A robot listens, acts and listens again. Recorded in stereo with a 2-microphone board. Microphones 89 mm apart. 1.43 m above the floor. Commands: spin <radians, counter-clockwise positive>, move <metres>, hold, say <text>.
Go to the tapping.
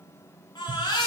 spin -0.87
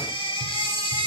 hold
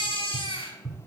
move 1.0
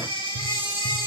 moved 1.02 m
move 1.0
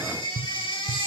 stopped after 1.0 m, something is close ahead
say I am next to the tapping.